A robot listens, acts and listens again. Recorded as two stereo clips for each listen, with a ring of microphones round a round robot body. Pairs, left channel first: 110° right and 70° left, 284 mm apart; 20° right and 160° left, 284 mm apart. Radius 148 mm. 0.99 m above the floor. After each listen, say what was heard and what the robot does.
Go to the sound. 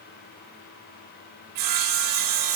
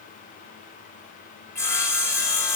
The sawing: 60° left. Turn 60° left.
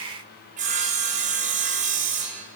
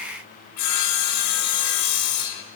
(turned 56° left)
Drive 1.0 m forward.
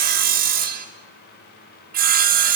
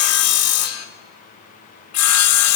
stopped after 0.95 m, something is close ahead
The sawing is now 10° left. Turn 10° left.
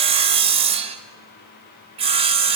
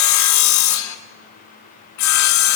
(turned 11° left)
I am next to the sawing.